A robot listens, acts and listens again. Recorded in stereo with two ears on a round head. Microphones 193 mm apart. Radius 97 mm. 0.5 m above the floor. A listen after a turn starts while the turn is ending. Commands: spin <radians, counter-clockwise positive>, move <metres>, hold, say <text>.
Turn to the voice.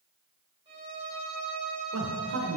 spin -0.96
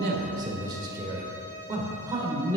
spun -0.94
spin -0.35
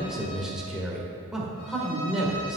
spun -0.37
say Found it: a man speaking, straight ahead.